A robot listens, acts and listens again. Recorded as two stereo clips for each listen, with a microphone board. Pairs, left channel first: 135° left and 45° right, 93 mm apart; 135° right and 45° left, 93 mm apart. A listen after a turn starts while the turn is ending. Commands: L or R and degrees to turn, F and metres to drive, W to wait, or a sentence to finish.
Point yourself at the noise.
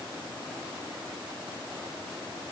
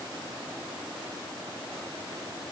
W
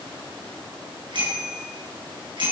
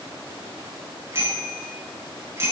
R15
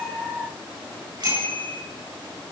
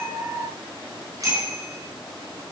Facing the bicycle bell.